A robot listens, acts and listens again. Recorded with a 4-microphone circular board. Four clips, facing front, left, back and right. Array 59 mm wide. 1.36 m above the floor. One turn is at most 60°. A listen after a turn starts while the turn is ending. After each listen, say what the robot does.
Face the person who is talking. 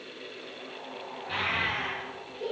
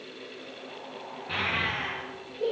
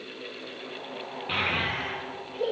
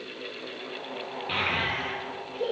Turn 60° right.
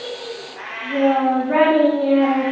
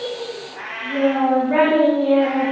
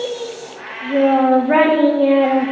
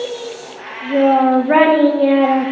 Turn 60° right.
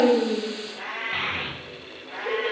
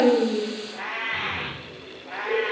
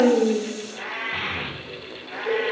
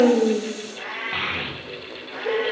Turn 60° right.
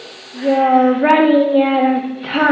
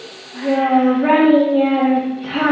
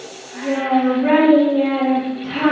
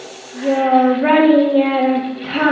Turn 10° right.
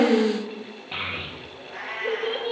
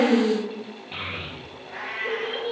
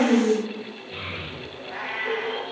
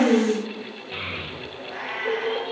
Found it: a child speaking, straight ahead, 1 to 2 m away.